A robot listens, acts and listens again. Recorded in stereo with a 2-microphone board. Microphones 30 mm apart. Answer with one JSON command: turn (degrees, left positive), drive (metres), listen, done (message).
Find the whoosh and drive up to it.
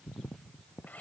{"listen": true}
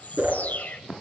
{"turn": -90}
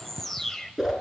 {"drive": 1.0}
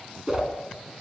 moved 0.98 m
{"turn": -15}
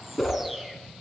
{"drive": 1.0}
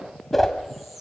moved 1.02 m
{"turn": 10}
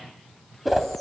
{"drive": 1.0}
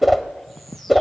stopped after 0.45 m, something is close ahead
{"done": "Arrived at the whoosh, straight ahead."}